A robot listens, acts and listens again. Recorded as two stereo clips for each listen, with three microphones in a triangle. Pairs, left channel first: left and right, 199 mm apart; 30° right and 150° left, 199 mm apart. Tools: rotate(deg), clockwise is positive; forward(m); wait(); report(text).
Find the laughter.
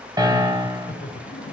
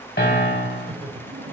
rotate(-100)
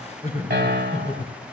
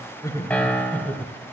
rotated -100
rotate(-55)
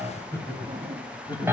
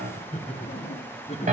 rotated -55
rotate(-25)
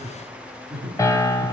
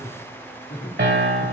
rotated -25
report("Found it: laughter, straight ahead.")